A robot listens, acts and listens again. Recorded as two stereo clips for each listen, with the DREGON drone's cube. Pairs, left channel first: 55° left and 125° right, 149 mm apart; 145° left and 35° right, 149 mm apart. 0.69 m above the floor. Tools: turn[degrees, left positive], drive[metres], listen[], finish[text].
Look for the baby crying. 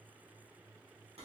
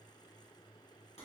Action: listen[]
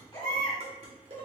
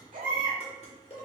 Action: finish[Facing the baby crying, 1 to 2 m away.]